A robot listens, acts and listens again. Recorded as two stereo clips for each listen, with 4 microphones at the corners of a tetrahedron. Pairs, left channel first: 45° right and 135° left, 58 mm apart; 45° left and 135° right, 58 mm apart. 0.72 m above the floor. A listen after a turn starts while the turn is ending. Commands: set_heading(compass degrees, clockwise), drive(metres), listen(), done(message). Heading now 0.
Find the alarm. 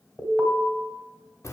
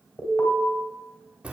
set_heading(290)
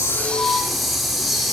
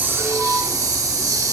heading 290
listen()
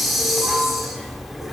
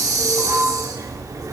listen()
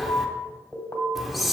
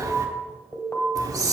done("Found it: an alarm, straight ahead, 2 to 4 m away.")